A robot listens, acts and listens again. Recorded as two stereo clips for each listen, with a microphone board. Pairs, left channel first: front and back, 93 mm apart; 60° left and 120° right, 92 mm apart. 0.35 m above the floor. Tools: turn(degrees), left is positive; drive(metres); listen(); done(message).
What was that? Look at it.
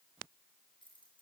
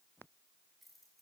turn(degrees=-30)
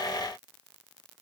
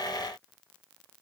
listen()
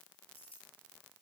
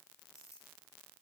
done("Facing the keys jangling, over 4 m away.")